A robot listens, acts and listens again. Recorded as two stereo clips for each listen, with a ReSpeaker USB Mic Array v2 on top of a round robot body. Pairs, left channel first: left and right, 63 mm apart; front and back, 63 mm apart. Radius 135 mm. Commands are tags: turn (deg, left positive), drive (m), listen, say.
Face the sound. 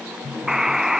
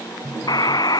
<say>Found it: a buzzer, straight ahead.</say>